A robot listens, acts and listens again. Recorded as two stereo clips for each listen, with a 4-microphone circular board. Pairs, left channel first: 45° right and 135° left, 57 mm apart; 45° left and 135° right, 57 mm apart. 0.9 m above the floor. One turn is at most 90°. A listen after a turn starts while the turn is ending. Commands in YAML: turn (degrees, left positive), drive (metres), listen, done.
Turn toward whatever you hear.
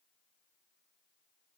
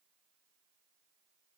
listen: true
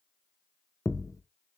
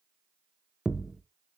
turn: -55
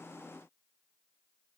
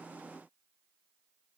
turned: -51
done: "I heard a thud from this way, but can't make it out now."